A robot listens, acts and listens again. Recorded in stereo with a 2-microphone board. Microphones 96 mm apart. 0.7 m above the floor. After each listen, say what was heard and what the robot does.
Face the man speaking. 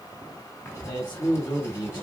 The man speaking: about 55° left or 125° left. Turn 55° left.
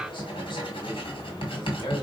So it is at 70° left. Turn 70° left.
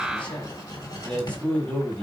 The man speaking is now 15° left. Turn 15° left.
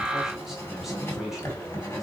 Facing the man speaking.